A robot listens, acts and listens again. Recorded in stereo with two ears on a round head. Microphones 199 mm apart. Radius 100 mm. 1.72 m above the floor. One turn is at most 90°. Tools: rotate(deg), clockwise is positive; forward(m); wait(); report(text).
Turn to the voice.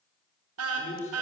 rotate(-35)
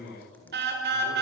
rotate(-90)
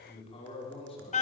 rotate(-25)
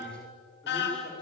wait()
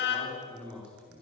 report("Facing the man speaking.")